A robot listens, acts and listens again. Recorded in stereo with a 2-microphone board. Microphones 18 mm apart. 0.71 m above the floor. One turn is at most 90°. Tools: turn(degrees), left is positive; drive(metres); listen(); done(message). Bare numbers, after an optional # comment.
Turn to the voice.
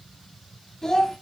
# The child speaking: about 35° left or 145° left.
turn(35)
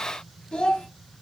# So it is at 110° left.
turn(90)
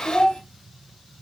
# The child speaking is now 55° left.
turn(55)
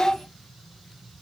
# The child speaking is now 10° left.
turn(10)
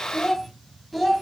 done("Facing the child speaking, under 1 m away.")